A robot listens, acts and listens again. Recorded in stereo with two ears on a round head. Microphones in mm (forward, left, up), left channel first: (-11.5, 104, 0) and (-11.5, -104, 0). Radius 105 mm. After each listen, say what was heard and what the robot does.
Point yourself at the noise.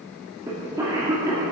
The cough: about 15° right or 165° right. Turn 15° right.
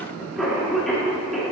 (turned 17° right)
Found it: a cough, straight ahead, 2 to 4 m away.